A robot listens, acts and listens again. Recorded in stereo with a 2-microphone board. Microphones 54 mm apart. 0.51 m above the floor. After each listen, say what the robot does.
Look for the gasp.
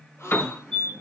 Turn 50° left.
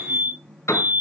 Keep listening.
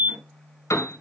I heard a gasp, but can't make it out now. It was about straight ahead or 80° left.